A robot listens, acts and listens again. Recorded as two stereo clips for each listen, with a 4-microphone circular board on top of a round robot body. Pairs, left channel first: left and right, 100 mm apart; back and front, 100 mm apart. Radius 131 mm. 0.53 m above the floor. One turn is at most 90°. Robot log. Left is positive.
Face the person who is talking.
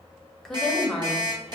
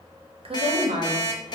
end: Facing the woman speaking, 1 to 2 m away.